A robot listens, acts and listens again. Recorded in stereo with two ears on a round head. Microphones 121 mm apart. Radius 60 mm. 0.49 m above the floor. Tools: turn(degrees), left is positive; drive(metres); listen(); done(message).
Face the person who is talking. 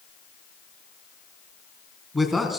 turn(degrees=30)
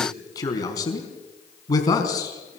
turn(degrees=150)
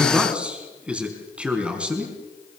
turn(degrees=-10)
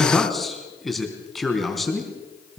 done("Facing the man speaking.")